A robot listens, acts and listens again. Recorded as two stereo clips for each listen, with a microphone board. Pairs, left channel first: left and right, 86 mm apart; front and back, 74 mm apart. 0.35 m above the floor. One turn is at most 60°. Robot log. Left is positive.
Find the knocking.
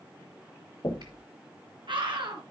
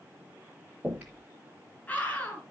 note: The knocking: 100° left.
cmd yaw +60
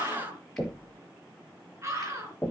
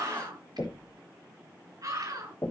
note: The knocking is now 25° left.
cmd yaw +25
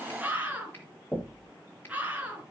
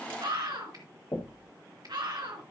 note: The knocking is now 10° left.
cmd yaw +10
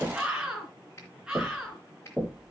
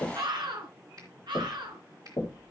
end: Facing the knocking.